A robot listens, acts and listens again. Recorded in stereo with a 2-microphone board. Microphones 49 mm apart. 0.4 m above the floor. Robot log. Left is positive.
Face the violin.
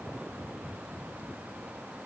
cmd idle
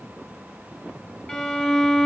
cmd yaw +30
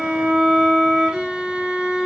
note: So it is at 15° right.
cmd yaw -15
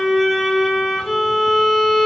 end: Found it: a violin, straight ahead.